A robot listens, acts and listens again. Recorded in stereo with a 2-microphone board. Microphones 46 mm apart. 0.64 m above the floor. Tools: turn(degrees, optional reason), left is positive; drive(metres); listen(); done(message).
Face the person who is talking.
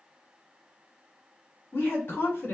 turn(degrees=50, reason="The woman speaking: about 50° left or 130° left.")
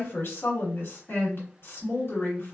turn(degrees=70, reason="So it is at 70° left.")
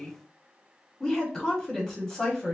turn(degrees=20, reason="The woman speaking is now 20° left.")
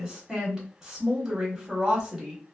done("Facing the woman speaking.")